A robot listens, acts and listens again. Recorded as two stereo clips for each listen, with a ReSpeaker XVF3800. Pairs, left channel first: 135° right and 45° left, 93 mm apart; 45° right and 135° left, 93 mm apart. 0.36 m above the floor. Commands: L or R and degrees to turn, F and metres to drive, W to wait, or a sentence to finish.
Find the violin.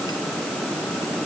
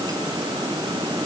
W
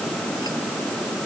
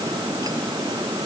W
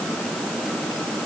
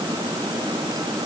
I can't make out a violin to turn to.